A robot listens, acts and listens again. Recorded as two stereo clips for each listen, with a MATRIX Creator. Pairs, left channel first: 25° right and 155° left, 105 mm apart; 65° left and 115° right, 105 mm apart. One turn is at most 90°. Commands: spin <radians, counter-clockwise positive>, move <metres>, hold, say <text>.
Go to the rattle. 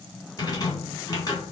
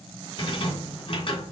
spin 0.52
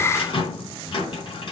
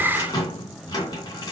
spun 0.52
spin 0.26
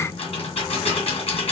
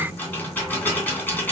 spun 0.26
move 1.0
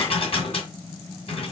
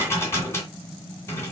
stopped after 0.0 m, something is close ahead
say Blocked. The rattle is further on, straight ahead.